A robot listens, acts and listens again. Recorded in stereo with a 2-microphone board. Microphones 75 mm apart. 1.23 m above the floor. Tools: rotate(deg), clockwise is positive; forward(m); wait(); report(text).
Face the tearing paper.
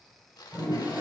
rotate(-90)
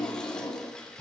rotate(-10)
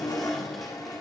wait()
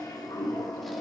wait()
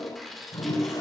report("Found it: tearing paper, straight ahead, 2 to 4 m away.")